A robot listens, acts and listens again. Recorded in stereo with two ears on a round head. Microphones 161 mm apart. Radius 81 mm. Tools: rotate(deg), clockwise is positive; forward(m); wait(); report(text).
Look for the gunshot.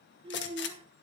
rotate(-70)
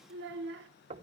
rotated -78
wait()
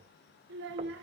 report("I heard a gunshot, but can't make it out now. It was about 10° right or 35° left.")